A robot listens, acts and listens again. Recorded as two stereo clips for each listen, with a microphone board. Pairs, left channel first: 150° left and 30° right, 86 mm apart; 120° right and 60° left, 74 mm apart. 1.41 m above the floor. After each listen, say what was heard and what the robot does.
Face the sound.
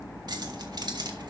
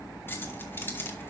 The keys jangling: 60° right. Turn 60° right.
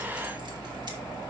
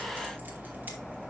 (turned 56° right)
Keep listening.
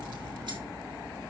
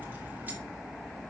Keep listening.
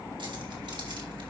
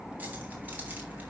I heard keys jangling from this way, but can't make it out now.